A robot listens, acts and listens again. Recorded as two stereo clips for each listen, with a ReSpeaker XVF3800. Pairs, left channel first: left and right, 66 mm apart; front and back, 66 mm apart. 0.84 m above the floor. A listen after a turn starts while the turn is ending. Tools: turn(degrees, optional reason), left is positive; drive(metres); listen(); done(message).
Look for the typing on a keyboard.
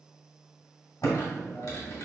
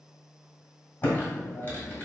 turn(degrees=60, reason="The typing on a keyboard: 60° left.")
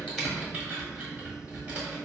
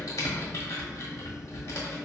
turn(degrees=-25, reason="The typing on a keyboard is now 25° right.")
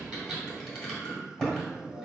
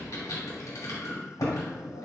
done("Facing the typing on a keyboard.")